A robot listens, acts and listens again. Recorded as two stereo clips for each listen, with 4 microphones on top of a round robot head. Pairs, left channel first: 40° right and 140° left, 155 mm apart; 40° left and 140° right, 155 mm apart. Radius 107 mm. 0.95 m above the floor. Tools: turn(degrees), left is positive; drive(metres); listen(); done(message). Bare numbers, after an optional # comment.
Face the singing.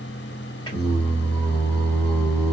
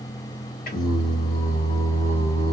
done("Found it: singing, straight ahead, 1 to 2 m away.")